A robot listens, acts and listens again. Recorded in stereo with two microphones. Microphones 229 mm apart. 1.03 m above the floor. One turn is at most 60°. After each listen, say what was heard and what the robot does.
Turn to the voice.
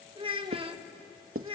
The child speaking: about 25° right or 155° right. Turn 25° right.
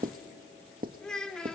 Facing the child speaking, 1 to 2 m away.